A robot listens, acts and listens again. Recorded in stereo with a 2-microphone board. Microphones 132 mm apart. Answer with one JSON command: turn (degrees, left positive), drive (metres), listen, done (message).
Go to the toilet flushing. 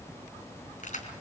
{"listen": true}
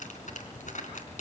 {"listen": true}
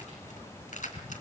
{"done": "I can't make out a toilet flushing to turn to."}